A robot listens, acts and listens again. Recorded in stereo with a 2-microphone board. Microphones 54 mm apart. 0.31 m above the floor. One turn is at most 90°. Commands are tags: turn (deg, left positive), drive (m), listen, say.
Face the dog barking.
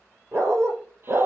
<turn deg="-60"/>
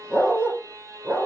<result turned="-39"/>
<turn deg="-30"/>
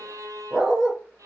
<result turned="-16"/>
<turn deg="-20"/>
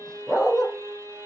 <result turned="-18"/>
<say>Facing the dog barking, 2 to 4 m away.</say>